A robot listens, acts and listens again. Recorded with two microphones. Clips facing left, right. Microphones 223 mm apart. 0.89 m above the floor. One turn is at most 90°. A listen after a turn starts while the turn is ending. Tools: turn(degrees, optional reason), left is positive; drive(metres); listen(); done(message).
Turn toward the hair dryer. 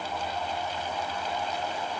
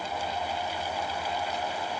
listen()
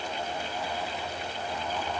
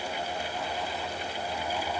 listen()
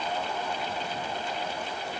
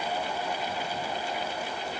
done("I can't make out a hair dryer.")